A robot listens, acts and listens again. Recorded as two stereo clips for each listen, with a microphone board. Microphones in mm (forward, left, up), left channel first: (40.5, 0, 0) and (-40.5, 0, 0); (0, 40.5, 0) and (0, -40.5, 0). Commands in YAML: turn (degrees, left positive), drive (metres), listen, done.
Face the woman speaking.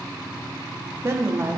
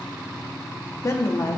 turn: 125
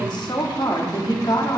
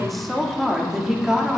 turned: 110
turn: -10
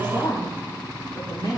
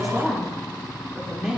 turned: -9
turn: -10
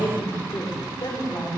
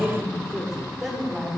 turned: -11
done: "Found it: a woman speaking, straight ahead."